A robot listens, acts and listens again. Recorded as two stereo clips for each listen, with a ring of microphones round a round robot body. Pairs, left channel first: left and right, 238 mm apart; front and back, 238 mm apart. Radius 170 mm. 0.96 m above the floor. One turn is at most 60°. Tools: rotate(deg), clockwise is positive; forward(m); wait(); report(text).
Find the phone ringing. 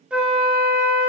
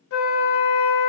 wait()
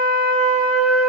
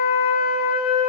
wait()
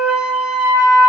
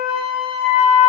report("I can't make out a phone ringing, only a flute.")